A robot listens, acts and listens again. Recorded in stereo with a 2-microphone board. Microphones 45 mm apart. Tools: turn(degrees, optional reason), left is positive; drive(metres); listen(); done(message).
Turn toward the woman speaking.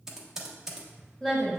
turn(degrees=30)
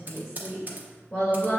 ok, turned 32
turn(degrees=130, reason="So it is at 130° left.")
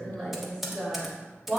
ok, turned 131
done("Facing the woman speaking, 2 to 4 m away.")